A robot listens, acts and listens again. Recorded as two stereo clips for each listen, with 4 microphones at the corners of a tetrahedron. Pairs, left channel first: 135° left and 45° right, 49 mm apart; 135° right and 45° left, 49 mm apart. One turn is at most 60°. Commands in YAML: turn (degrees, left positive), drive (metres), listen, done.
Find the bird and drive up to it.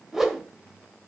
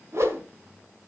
listen: true
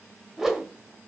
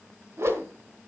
listen: true
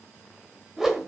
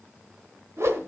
done: "I can't make out a bird to turn to."